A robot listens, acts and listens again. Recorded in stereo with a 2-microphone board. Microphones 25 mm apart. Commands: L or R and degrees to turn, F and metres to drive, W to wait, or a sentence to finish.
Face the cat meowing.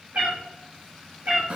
R70
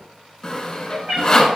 R35
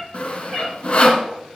W
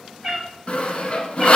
R15
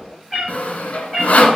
Facing the cat meowing.